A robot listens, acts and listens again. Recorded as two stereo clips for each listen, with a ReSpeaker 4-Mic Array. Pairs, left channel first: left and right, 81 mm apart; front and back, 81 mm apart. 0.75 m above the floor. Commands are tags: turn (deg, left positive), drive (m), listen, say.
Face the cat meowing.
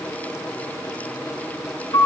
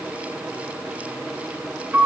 <listen/>
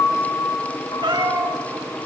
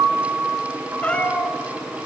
<turn deg="-75"/>
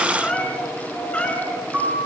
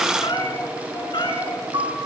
<turn deg="15"/>
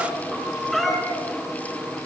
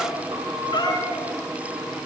<say>Facing the cat meowing, over 4 m away.</say>